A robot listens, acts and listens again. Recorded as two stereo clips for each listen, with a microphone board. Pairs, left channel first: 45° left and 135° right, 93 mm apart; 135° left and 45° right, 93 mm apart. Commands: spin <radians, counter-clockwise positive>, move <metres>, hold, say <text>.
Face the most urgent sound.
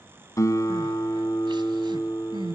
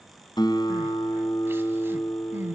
spin -1.92
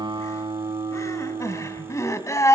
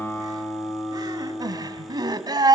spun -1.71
spin -0.17
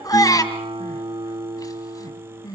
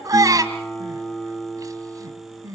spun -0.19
say Found it: crying, straight ahead.